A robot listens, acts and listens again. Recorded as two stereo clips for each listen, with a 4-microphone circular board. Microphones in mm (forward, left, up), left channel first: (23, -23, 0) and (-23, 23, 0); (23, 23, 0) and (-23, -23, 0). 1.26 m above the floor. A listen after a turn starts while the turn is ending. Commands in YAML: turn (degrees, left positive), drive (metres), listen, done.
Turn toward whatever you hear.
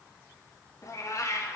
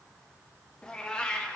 turn: -30
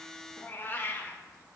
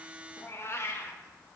done: "Facing the cat meowing, under 1 m away."